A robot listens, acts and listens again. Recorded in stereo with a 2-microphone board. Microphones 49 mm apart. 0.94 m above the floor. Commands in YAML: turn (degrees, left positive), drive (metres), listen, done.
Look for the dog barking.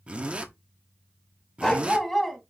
turn: 30
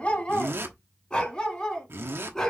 turn: 30
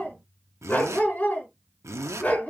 turn: 150
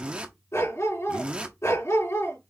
turn: 70
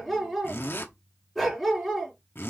done: "Found it: a dog barking, straight ahead."